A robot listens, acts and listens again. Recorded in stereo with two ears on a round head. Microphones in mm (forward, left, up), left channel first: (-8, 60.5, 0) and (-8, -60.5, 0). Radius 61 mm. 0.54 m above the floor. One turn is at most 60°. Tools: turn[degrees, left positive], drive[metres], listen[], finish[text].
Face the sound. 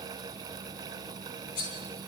Thought: The cutlery clinking: about 70° left or 110° left.
Action: turn[60]
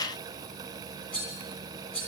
Thought: So it is at 10° left.
Action: turn[10]
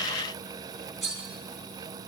Action: finish[Found it: cutlery clinking, straight ahead.]